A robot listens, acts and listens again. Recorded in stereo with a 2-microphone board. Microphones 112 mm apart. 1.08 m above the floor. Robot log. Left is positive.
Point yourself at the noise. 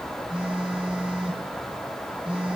cmd yaw -30
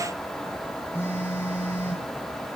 note: So it is at 20° left.
cmd yaw +20
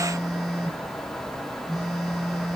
end: Facing the phone buzzing, over 4 m away.